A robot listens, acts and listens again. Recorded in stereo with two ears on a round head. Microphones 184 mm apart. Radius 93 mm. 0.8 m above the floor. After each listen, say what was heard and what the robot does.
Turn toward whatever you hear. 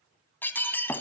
Turn 30° left.
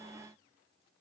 Keep listening.
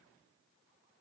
I heard breaking glass, but can't make it out now. It was about 20° right or 140° left.